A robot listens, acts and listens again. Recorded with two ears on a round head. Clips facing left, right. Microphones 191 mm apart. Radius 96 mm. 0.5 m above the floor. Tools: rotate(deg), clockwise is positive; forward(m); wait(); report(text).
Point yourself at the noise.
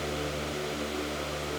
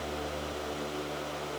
wait()
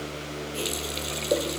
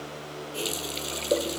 rotate(-30)
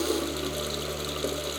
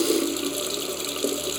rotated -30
rotate(30)
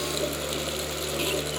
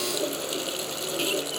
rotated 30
rotate(10)
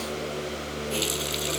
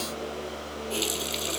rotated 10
report("Found it: a running tap, straight ahead.")